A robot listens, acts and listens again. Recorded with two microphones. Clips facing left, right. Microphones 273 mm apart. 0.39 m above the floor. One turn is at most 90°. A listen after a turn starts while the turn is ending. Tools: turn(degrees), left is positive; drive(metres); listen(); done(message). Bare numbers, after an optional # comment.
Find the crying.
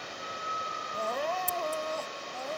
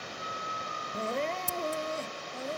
# The crying: about 25° right or 155° right.
turn(-25)
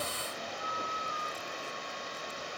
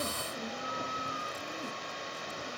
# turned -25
listen()
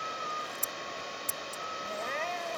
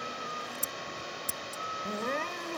# So it is at 130° right.
turn(-90)
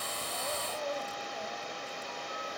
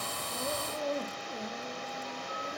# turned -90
# The crying is now 35° right.
turn(-35)
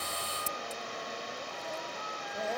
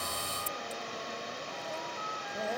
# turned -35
listen()
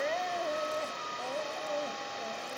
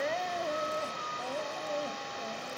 done("Facing the crying.")